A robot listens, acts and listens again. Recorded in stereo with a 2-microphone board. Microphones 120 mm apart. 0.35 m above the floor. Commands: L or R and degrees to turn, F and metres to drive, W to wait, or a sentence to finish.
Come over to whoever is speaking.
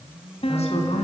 L60
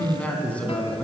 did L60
L10
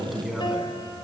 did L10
F1.0
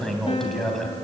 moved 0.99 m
F1.0
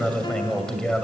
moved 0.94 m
L10
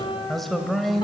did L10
F1.0
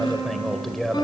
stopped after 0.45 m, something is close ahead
I am next to the man speaking.